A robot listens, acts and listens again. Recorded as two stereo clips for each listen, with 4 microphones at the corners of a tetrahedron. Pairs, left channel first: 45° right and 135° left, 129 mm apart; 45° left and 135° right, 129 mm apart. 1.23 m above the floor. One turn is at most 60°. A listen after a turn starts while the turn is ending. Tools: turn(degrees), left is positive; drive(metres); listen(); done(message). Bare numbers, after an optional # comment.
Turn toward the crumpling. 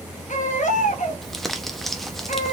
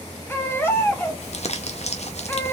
# The crumpling: 45° left.
turn(45)
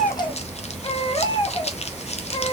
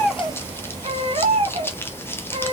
# The crumpling is now 25° right.
turn(-25)
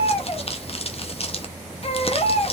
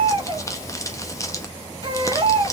# The crumpling is now 15° right.
turn(-15)
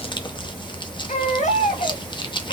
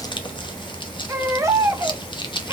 done("Found it: crumpling, straight ahead.")